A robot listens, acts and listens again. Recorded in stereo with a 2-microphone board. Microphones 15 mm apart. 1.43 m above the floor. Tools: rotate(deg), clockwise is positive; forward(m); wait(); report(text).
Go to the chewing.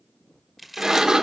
rotate(30)
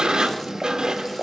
wait()
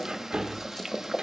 wait()
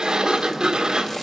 report("I heard chewing, but can't make it out now. It was about 25° left or 145° right. I did not reach it.")